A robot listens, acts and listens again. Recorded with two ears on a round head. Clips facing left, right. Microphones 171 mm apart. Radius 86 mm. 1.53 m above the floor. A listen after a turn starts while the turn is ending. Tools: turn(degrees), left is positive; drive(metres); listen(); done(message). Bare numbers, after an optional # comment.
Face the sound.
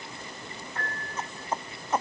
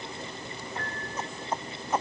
turn(-30)
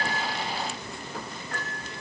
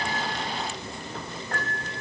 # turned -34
# So it is at 135° right.
turn(-135)
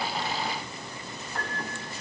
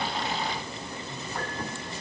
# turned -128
done("Found it: a piano, straight ahead, over 4 m away.")